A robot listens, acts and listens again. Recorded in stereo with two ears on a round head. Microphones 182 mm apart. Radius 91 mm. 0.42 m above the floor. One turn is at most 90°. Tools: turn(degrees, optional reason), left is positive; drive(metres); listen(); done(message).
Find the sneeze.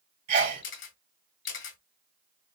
turn(degrees=-45, reason="The sneeze: about 45° right or 135° right.")
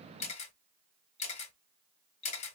listen()
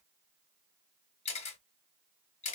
done("I heard a sneeze, but can't make it out now. It was about straight ahead or 90° right.")